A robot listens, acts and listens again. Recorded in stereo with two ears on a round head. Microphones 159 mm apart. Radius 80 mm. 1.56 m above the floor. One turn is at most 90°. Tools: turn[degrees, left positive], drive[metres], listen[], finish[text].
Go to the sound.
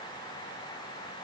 Action: listen[]
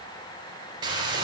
Thought: The frying: about 25° right or 155° right.
Action: turn[-25]
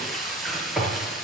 Action: drive[1.0]
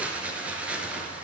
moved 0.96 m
Thought: The frying is now 10° right.
Action: turn[-10]
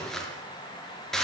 Action: drive[1.0]
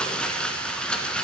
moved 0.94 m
Action: drive[1.0]
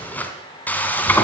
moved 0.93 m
Thought: The frying is now 10° left.
Action: turn[10]
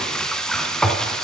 Action: drive[1.0]
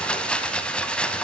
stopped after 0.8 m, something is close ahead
Thought: The frying is now 10° left.
Action: turn[10]
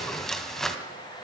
Action: finish[I am next to the frying.]